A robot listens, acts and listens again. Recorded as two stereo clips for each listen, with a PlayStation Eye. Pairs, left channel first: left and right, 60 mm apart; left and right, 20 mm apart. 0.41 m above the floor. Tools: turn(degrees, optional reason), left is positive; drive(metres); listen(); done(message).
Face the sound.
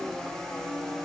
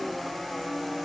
listen()
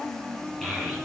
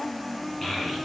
turn(degrees=30)
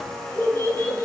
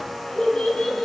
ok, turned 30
turn(degrees=140, reason="So it is at 140° left.")
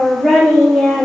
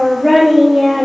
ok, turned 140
done("Found it: a child speaking, straight ahead, over 4 m away.")